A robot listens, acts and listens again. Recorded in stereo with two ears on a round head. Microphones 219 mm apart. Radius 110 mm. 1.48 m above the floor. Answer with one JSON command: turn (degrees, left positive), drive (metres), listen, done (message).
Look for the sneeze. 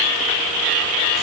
{"listen": true}
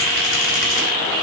{"listen": true}
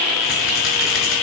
{"done": "I can't make out a sneeze."}